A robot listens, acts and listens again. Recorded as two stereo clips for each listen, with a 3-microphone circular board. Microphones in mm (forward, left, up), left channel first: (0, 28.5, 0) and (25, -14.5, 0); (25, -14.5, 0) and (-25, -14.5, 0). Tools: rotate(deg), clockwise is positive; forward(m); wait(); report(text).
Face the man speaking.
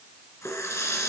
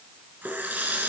wait()
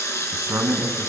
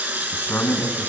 rotate(35)
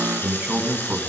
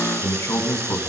report("Found it: a man speaking, straight ahead, 2 to 4 m away.")